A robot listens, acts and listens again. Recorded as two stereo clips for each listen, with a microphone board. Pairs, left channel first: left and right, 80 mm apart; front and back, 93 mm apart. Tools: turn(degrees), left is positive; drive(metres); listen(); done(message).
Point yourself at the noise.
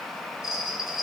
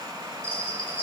done("Found it: a bell, straight ahead, 2 to 4 m away.")